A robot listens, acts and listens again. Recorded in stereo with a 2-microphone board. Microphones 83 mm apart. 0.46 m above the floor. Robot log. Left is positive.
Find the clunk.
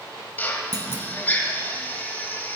note: The clunk: about 55° right or 125° right.
cmd yaw -55
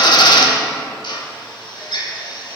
cmd idle
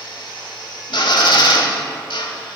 end: I heard a clunk, but can't make it out now. It was about straight ahead or 70° right.